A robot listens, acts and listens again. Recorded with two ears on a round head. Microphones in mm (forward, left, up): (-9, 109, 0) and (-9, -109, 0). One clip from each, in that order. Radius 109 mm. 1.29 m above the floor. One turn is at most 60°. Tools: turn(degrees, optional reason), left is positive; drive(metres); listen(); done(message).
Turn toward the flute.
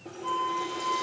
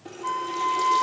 turn(degrees=-25, reason="The flute: about 25° right or 155° right.")
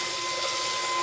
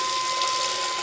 listen()
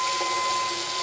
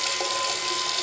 listen()
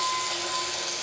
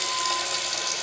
done("I heard a flute, but can't make it out now. It was about straight ahead or 130° right.")